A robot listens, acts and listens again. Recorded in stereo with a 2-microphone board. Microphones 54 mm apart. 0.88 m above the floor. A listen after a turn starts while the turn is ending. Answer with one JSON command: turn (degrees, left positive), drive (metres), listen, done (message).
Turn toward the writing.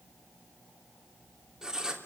{"turn": -30}
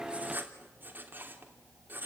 {"turn": -140}
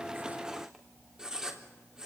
{"turn": -15}
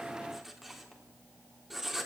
{"done": "Facing the writing."}